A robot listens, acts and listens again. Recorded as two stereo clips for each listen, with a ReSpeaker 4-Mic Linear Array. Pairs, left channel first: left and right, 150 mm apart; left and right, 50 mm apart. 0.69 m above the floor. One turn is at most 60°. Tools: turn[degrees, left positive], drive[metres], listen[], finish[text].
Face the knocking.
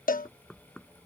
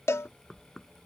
Action: turn[30]
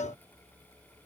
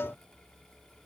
Action: listen[]
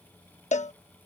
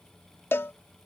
Action: listen[]
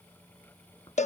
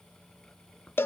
Action: finish[I heard knocking, but can't make it out now. It was about 30° right or 150° left.]